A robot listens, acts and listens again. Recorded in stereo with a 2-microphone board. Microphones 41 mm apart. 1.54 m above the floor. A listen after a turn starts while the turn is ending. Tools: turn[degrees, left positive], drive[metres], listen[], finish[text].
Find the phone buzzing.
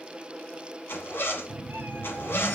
Thought: The phone buzzing: about 30° left or 150° left.
Action: turn[30]
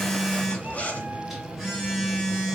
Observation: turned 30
Action: finish[Facing the phone buzzing.]